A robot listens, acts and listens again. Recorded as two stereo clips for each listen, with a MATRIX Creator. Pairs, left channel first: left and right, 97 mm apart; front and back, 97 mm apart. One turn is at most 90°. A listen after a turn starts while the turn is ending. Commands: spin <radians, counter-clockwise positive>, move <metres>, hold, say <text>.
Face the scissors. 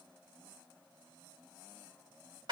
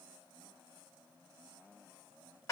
hold
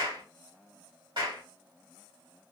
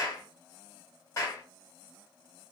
hold
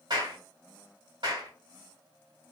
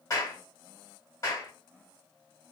say I can't make out scissors, only a clap.